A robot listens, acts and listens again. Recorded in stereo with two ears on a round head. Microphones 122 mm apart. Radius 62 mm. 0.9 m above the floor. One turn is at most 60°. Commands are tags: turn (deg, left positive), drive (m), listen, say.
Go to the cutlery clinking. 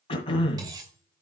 <turn deg="-25"/>
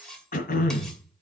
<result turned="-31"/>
<drive m="1.0"/>
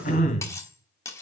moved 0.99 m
<turn deg="20"/>
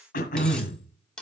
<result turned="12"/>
<drive m="1.0"/>
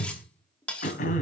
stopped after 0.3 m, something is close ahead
<turn deg="10"/>
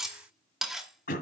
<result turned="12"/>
<say>Arrived at the cutlery clinking, straight ahead.</say>